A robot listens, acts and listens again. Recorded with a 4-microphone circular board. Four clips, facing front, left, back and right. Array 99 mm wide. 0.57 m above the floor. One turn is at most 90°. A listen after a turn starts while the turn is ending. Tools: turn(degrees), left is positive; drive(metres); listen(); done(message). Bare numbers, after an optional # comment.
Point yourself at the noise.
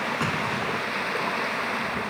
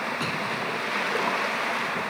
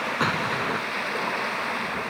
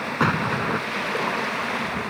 # The explosion: 110° right.
turn(-90)
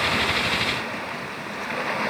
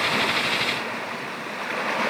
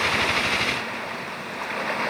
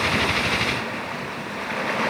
# Nothing new. It was at 20° right.
turn(-20)
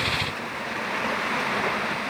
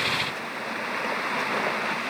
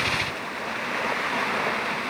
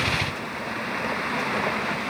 done("Facing where the explosion came from. I can't hear it now.")